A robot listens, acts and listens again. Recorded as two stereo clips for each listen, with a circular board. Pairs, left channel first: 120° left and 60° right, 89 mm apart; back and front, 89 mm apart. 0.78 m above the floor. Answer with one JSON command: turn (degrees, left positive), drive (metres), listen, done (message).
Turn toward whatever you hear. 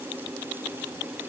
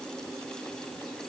{"listen": true}
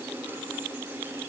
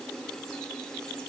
{"listen": true}
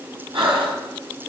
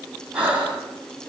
{"turn": -80}
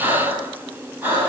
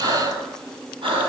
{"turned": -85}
{"done": "Facing the breathing."}